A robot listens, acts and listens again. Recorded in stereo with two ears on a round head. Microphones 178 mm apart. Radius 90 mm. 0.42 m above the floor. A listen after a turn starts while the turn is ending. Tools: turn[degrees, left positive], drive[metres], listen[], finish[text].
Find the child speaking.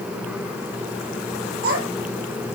Thought: The child speaking: about 60° right or 120° right.
Action: turn[-60]
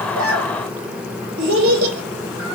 Thought: So it is at 55° right.
Action: turn[-55]
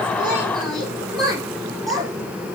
Action: finish[Facing the child speaking, over 4 m away.]